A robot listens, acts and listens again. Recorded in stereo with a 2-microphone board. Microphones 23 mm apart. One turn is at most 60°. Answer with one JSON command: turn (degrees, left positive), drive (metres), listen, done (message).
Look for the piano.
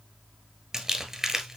{"listen": true}
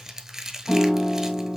{"turn": 55}
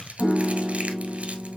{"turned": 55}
{"turn": 55}
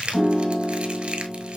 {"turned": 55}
{"done": "Found it: a piano, straight ahead."}